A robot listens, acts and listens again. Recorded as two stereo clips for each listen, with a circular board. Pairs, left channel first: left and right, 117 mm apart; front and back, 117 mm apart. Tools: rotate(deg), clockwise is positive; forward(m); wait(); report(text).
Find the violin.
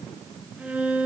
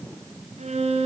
rotate(170)
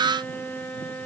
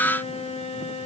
rotate(-15)
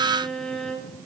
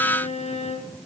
report("Found it: a violin, straight ahead, 2 to 4 m away.")